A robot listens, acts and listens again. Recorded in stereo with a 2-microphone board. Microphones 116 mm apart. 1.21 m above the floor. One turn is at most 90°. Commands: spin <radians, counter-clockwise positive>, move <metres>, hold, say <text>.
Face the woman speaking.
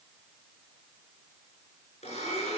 hold
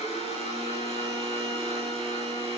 hold
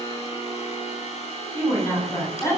spin 0.44
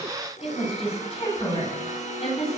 spin 1.57
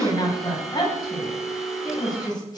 spin 0.61
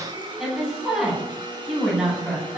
say Facing the woman speaking.